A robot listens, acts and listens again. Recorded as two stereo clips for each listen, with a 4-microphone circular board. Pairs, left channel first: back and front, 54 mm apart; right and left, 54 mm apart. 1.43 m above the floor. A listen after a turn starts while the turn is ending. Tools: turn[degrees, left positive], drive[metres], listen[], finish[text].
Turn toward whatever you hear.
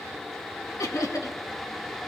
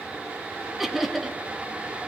Thought: The laughter: straight behind.
Action: turn[180]
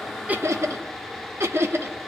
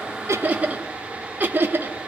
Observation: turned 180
Thought: The laughter is now 40° left.
Action: turn[40]
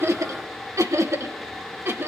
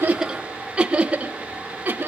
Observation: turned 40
Thought: The laughter is now 40° left.
Action: turn[40]
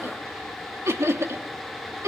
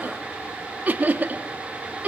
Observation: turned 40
Thought: The laughter is now 25° left.
Action: turn[25]
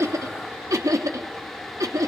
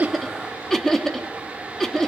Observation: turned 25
Thought: The laughter is now 10° right.
Action: turn[-10]
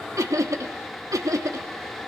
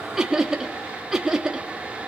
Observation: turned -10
Action: finish[Facing the laughter, 1 to 2 m away.]